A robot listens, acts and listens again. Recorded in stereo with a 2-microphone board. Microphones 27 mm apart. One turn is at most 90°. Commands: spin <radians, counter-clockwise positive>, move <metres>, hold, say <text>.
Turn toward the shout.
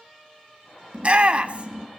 spin -0.79
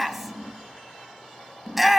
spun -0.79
say Facing the shout, under 1 m away.